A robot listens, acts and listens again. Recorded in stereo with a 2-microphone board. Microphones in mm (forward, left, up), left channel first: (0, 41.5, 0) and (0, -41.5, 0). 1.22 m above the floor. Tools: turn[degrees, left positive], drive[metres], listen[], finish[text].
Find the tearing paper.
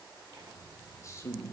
Thought: The tearing paper: about 65° right or 115° right.
Action: turn[-65]
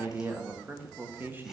Action: listen[]
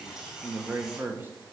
Thought: So it is at 10° right.
Action: turn[-10]
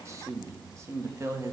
Action: finish[Found it: tearing paper, straight ahead, 2 to 4 m away.]